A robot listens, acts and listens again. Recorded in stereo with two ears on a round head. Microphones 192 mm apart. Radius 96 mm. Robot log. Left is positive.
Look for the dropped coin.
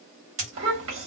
note: The dropped coin: about 35° right or 145° right.
cmd yaw -35
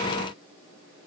cmd idle
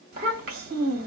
end: I heard a dropped coin, but can't make it out now. It was about straight ahead or 110° right.